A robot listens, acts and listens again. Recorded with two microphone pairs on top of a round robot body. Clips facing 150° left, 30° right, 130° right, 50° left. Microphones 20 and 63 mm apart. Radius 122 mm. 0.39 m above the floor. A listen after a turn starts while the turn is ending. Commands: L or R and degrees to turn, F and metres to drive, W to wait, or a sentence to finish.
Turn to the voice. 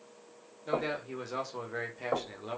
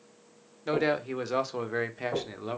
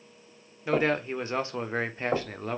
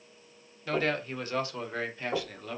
R95
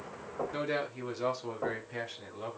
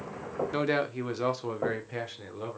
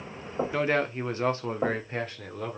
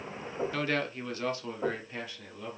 R100
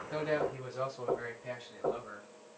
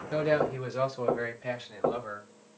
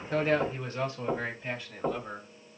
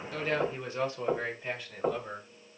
R35
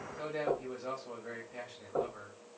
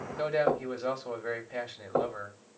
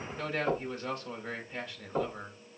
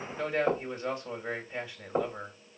R15
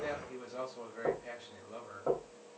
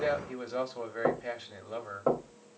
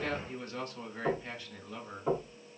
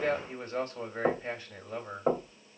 Facing the man speaking, 2 to 4 m away.